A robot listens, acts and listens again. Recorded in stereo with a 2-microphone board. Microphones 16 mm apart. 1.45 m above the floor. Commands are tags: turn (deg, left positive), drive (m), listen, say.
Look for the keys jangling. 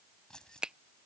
<turn deg="65"/>
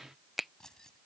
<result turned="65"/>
<turn deg="45"/>
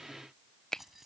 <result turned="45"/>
<turn deg="-15"/>
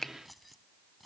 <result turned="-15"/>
<say>Facing the keys jangling.</say>